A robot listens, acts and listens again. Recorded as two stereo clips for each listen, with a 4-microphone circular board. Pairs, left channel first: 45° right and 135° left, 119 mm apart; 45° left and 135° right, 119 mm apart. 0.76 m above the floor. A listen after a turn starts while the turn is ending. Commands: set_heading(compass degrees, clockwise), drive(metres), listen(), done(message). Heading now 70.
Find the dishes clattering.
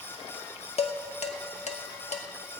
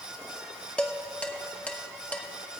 set_heading(105)
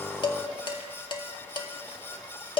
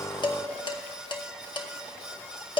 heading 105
done("Found it: dishes clattering, straight ahead.")